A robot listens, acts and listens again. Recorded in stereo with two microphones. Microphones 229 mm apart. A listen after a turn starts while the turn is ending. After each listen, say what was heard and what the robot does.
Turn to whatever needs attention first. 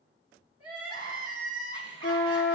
The crying: about 75° right or 105° right. Turn 75° right.
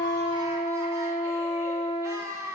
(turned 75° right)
So it is at 15° right. Turn 15° right.
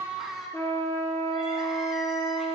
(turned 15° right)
Found it: crying, straight ahead, 1 to 2 m away.